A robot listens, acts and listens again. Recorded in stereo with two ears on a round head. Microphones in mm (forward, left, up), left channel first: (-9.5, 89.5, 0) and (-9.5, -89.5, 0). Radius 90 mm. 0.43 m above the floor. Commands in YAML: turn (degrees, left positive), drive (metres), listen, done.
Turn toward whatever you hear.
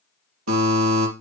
turn: -90
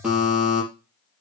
done: "Facing the buzzer."